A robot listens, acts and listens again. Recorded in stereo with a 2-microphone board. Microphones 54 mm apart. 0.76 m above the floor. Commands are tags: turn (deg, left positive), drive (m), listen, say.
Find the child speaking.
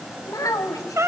<turn deg="90"/>
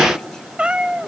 <listen/>
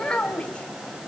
<turn deg="20"/>
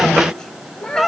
<turn deg="15"/>
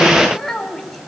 <say>Found it: a child speaking, straight ahead, 2 to 4 m away.</say>